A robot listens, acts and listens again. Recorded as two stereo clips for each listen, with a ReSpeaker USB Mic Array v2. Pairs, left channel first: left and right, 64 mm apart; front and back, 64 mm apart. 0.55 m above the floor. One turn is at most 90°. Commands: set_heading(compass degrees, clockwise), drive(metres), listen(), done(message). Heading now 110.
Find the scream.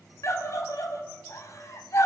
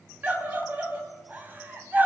set_heading(20)
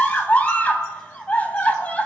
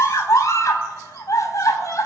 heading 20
set_heading(355)
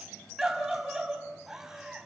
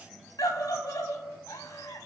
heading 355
set_heading(5)
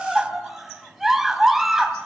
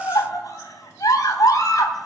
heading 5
done("Found it: a scream, straight ahead, 2 to 4 m away.")